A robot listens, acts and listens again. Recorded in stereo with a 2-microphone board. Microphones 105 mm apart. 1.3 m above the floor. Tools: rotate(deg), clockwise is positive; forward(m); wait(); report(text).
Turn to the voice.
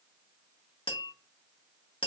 wait()
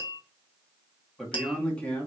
rotate(-30)
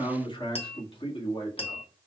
rotate(-120)
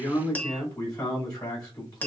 rotate(-40)
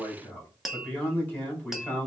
rotate(-15)
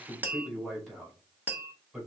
report("Found it: a man speaking, straight ahead, 2 to 4 m away.")